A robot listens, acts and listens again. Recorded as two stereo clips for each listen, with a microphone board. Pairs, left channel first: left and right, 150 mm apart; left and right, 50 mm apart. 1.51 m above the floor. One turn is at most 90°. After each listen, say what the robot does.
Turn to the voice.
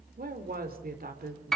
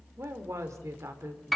Turn 90° right.
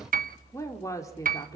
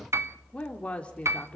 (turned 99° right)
Turn 25° left.
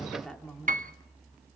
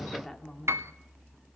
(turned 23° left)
Found it: a woman speaking, straight ahead.